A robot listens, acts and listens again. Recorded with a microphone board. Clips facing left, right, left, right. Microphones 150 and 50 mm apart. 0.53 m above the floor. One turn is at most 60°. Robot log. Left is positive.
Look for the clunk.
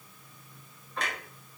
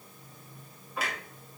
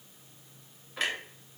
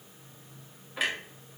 cmd yaw -30
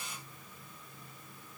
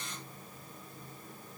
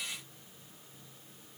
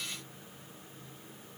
cmd idle
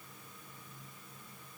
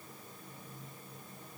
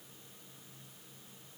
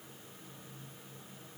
end: I heard a clunk, but can't make it out now. It was about 25° left or 145° right.